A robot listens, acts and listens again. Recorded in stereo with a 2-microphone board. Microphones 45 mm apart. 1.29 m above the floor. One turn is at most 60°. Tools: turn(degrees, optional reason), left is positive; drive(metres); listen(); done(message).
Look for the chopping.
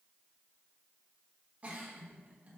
listen()
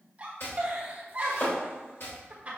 turn(degrees=60, reason="The chopping: about 65° left or 115° left.")
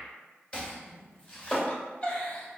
turn(degrees=30, reason="So it is at 30° left.")
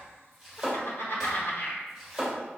done("Facing the chopping.")